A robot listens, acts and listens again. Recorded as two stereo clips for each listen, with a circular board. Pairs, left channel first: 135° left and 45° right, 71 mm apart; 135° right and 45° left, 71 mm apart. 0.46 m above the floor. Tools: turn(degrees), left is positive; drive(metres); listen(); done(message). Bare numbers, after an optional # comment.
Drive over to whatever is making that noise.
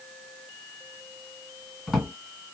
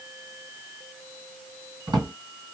# The drawer: 45° left.
turn(45)
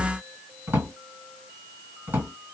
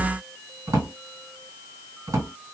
# The drawer is now 10° left.
turn(10)
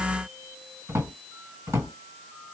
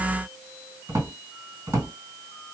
drive(1.0)
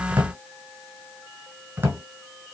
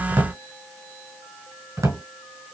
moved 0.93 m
# The drawer is now 10° left.
turn(10)
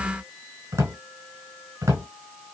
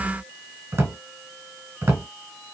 drive(1.0)
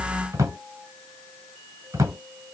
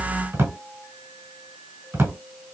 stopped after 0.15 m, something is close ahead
done("I am next to the drawer.")